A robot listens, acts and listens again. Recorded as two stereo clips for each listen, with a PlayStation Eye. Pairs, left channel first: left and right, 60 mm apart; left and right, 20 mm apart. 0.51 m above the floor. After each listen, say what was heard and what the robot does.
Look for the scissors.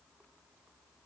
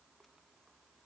Keep listening.
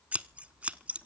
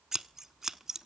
The scissors: about 25° right or 155° right. Turn 25° right.
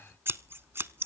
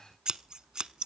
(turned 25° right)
So it is at 130° right. Turn 130° right.
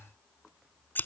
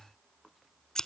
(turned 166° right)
The scissors is now 35° left. Turn 35° left.
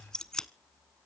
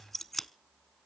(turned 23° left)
The scissors is now 10° left. Turn 10° left.
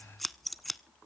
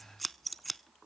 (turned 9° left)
Facing the scissors, under 1 m away.